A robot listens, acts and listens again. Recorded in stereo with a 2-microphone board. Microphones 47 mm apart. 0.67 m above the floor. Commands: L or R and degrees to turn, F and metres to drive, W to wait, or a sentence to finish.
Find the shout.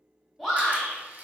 L30
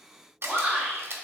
R25
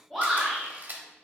Found it: a shout, straight ahead, 2 to 4 m away.